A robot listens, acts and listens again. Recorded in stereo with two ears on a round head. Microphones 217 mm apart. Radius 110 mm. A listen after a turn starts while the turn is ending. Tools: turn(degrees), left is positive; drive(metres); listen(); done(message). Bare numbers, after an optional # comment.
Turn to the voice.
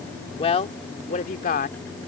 # The woman speaking: about 35° left or 145° left.
turn(35)
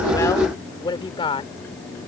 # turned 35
# So it is at 20° left.
turn(20)
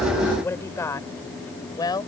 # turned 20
# The woman speaking is now 15° left.
turn(15)
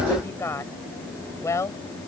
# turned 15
# The woman speaking is now 10° left.
turn(10)
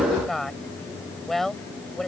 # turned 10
done("Found it: a woman speaking, straight ahead.")